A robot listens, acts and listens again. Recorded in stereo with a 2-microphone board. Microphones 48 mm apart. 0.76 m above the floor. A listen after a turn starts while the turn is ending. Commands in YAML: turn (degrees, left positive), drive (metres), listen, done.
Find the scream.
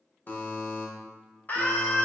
turn: 40
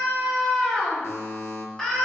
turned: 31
turn: 15
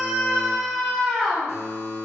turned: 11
done: "Facing the scream, 1 to 2 m away."